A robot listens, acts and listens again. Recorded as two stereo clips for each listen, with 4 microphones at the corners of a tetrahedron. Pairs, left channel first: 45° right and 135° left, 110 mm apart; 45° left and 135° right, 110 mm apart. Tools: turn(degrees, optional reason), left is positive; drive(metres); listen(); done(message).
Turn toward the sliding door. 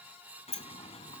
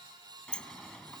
turn(degrees=-35, reason="The sliding door: 35° right.")
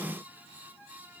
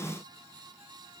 listen()
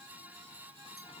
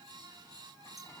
listen()
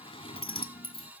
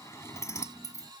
turn(degrees=-15, reason="The sliding door is now 15° right.")
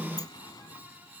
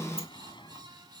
done("Found it: a sliding door, straight ahead.")